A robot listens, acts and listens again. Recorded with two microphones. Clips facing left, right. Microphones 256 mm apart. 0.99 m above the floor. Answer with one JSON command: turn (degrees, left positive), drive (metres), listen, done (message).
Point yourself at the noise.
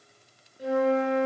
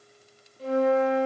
{"turn": 30}
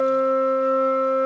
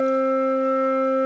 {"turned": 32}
{"turn": 135}
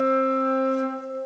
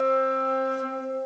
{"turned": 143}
{"done": "Found it: a flute, straight ahead, over 4 m away."}